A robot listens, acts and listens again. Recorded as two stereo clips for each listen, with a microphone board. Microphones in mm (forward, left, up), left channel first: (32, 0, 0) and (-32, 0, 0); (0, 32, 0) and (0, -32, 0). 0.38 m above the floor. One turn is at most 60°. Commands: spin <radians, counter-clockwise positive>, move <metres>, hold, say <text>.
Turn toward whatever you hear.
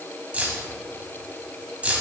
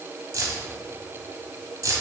spin -1.05
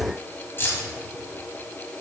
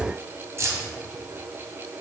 spin -0.87
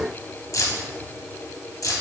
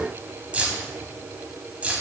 spin -0.35
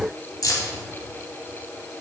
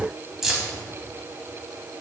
spin -0.17
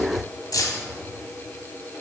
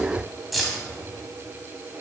say Found it: keys jangling, straight ahead.